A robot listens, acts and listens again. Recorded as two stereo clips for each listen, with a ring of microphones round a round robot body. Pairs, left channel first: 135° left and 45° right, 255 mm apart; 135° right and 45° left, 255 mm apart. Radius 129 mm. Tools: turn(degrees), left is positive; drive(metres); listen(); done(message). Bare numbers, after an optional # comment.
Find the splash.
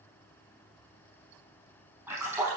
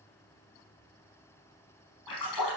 # The splash: 130° right.
turn(-130)
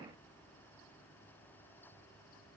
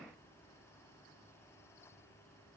done("Facing where the splash came from. I can't hear it now.")